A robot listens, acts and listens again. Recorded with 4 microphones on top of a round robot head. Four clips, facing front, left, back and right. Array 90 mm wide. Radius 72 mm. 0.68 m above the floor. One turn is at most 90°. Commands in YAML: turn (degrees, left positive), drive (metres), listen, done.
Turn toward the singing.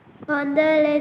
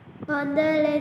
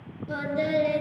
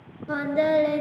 turn: 10
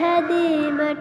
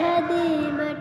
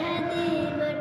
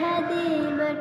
done: "Found it: singing, straight ahead, under 1 m away."